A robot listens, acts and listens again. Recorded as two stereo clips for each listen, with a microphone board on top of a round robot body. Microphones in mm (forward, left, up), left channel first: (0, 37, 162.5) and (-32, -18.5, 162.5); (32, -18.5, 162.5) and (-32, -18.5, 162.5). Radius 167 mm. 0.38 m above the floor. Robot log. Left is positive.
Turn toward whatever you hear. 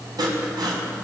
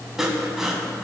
note: The sawing: 95° right.
cmd yaw -95
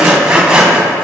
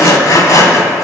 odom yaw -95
note: The sawing is now 45° right.
cmd yaw -45
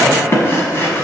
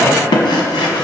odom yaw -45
end: Found it: sawing, straight ahead, 1 to 2 m away.